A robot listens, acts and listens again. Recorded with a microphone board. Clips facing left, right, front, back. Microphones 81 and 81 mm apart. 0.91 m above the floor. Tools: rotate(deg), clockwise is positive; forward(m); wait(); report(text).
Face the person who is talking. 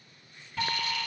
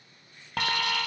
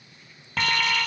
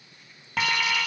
wait()
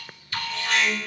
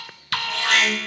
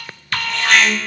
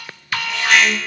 wait()
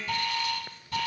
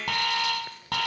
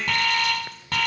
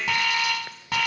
report("I can't make out anyone speaking, only an alarm.")